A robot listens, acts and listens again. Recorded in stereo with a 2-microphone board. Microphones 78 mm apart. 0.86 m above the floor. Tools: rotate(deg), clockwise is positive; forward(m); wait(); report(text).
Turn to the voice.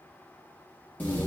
wait()
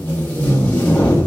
wait()
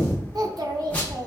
rotate(55)
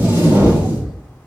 wait()
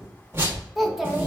report("Found it: a child speaking, straight ahead.")